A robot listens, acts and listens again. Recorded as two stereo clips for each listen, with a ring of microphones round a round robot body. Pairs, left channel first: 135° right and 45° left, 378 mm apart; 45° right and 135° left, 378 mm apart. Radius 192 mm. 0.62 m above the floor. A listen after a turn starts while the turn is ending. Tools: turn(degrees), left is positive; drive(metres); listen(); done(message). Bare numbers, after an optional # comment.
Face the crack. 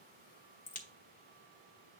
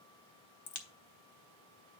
# The crack: 65° right.
turn(-65)
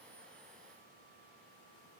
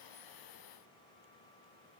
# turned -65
done("I heard a crack from this way, but can't make it out now.")